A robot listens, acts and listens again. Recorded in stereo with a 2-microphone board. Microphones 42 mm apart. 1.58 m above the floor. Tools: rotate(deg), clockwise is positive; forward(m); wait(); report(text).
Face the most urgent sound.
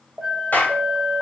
rotate(25)
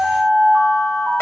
rotate(130)
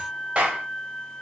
wait()
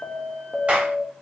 report("Found it: an alarm, straight ahead.")